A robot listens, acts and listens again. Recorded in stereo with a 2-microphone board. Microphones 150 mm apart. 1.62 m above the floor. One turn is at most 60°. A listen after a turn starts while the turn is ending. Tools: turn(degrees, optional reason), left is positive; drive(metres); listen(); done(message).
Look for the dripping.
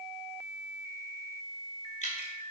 turn(degrees=45, reason="The dripping: about 45° left or 135° left.")
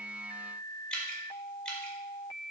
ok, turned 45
done("Found it: dripping, straight ahead.")